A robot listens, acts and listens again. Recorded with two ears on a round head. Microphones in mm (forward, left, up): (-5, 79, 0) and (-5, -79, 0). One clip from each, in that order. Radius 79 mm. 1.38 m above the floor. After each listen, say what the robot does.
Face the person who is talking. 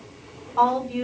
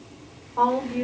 Turn 90° left.
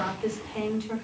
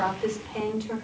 Facing the woman speaking.